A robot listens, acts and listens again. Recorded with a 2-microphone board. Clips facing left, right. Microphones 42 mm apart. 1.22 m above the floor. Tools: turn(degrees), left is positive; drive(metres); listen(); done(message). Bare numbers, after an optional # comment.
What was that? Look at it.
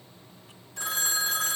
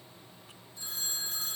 # The phone ringing: about 75° left or 105° left.
turn(75)
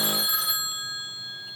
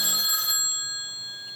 # So it is at 10° left.
turn(10)
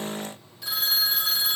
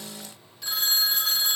done("Found it: a phone ringing, straight ahead, under 1 m away.")